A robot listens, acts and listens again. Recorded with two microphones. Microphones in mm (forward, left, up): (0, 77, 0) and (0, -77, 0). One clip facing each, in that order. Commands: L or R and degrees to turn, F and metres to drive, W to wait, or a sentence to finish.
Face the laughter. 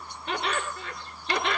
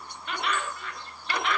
L30
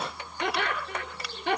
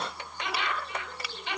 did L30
L125
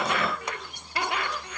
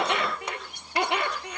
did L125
R25
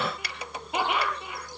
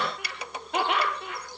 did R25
L10
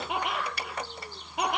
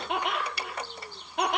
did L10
Facing the laughter, over 4 m away.